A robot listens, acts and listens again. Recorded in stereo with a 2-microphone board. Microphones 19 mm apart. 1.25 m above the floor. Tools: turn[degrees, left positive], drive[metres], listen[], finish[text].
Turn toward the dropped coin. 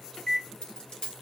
Thought: The dropped coin: about 65° left or 115° left.
Action: turn[65]
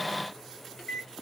Action: listen[]
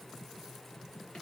Action: finish[I heard a dropped coin, but can't make it out now. It was about straight ahead or 50° left.]